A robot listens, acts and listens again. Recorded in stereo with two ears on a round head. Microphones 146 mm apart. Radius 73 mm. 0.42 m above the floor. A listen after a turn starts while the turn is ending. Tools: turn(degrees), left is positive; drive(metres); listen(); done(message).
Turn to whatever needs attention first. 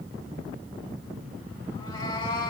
listen()
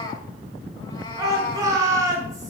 turn(degrees=-25)
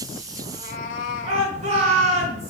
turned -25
turn(degrees=-130)
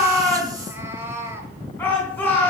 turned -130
turn(degrees=15)
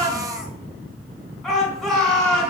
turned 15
done("Found it: a shout, straight ahead, 2 to 4 m away.")